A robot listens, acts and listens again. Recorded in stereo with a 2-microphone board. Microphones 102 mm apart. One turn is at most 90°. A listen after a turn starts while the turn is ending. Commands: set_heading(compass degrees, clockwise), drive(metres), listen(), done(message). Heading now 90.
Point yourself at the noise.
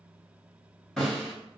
set_heading(60)
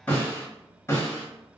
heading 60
set_heading(330)
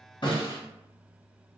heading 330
set_heading(250)
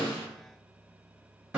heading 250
set_heading(260)
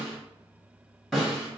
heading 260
done("Facing the snare drum.")